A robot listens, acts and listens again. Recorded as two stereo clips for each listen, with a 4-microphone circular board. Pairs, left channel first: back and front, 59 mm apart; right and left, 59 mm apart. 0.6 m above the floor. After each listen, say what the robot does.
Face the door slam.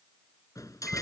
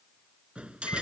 Turn 160° left.
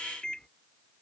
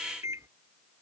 Facing where the door slam came from. I can't hear it now.